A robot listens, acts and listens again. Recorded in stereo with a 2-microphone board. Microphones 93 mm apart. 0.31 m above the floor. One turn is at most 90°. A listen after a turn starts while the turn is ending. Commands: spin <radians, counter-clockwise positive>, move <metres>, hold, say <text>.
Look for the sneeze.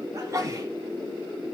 spin -0.61
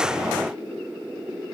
hold
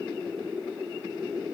say I heard a sneeze, but can't make it out now. It was about straight ahead or 110° right.